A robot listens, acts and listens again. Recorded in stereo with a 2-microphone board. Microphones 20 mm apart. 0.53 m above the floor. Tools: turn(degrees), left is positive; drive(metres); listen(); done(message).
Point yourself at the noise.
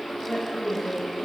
turn(degrees=35)
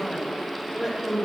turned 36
turn(degrees=-20)
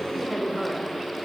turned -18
turn(degrees=-20)
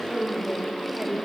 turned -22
turn(degrees=-35)
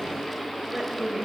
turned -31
turn(degrees=-25)
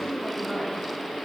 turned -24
done("Found it: a woman speaking, straight ahead.")